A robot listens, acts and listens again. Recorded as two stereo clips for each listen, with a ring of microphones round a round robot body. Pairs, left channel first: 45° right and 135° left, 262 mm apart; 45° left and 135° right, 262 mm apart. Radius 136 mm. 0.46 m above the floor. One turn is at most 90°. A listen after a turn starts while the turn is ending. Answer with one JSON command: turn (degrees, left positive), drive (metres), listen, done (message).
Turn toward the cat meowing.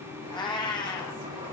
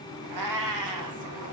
{"turn": -90}
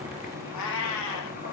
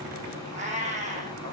{"turn": -70}
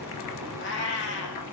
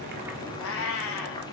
{"done": "Facing the cat meowing."}